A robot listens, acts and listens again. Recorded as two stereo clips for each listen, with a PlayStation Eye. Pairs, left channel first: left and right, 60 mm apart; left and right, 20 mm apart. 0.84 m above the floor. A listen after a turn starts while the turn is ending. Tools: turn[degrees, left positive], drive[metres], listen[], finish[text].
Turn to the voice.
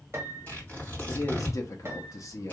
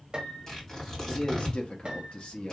Thought: The man speaking: about 60° left or 120° left.
Action: turn[60]
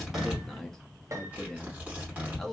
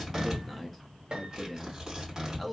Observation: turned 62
Thought: So it is at 10° left.
Action: turn[10]
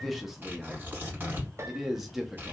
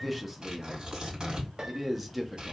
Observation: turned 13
Action: finish[Found it: a man speaking, straight ahead.]